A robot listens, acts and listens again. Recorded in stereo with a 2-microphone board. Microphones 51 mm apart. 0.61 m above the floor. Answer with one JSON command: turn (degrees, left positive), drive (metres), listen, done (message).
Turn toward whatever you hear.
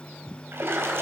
{"turn": -50}
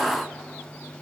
{"listen": true}
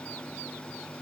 {"done": "I heard a splash, but can't make it out now. It was about straight ahead or 80° right."}